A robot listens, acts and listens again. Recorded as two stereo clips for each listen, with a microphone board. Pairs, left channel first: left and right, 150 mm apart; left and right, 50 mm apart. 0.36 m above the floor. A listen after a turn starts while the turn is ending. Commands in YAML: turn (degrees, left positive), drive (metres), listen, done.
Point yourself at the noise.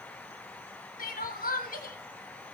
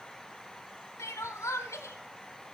turn: 75
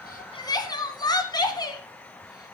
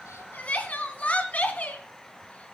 turn: 30
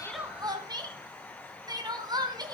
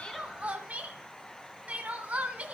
turn: -25
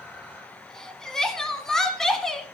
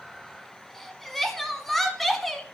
done: "Found it: crying, straight ahead, 1 to 2 m away."